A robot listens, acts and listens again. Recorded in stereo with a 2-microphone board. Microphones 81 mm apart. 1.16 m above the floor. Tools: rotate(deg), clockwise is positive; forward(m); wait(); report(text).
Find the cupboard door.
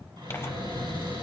rotate(90)
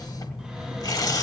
wait()
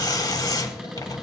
report("Found it: a cupboard door, straight ahead, over 4 m away.")